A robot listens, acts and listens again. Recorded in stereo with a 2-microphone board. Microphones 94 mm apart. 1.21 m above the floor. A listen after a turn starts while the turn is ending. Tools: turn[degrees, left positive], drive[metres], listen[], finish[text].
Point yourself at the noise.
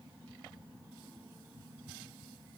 Action: listen[]
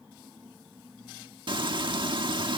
Thought: The frying: about 60° right or 120° right.
Action: turn[-60]
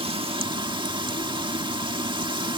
Thought: So it is at 60° right.
Action: turn[-60]
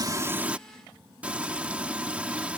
Thought: The frying is now 15° right.
Action: turn[-15]
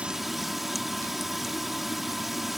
Action: finish[Found it: frying, straight ahead.]